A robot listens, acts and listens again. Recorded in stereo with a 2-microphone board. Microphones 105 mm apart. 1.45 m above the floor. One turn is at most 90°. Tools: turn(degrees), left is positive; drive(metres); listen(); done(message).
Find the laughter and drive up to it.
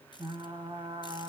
listen()
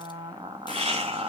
turn(degrees=-90)
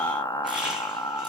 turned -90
listen()
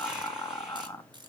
listen()
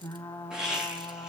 drive(metres=1.0)
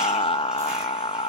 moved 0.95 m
listen()
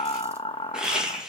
drive(metres=1.0)
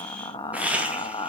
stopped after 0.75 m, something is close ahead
turn(degrees=-15)
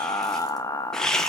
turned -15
done("Arrived at the laughter, straight ahead.")